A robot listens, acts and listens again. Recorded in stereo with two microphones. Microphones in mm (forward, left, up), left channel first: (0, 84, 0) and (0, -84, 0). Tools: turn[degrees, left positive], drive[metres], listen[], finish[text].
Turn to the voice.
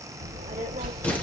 Thought: The child speaking: about 70° right or 110° right.
Action: turn[-70]
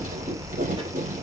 Thought: So it is at 35° right.
Action: turn[-35]
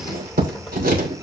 Action: finish[Facing the child speaking, 1 to 2 m away.]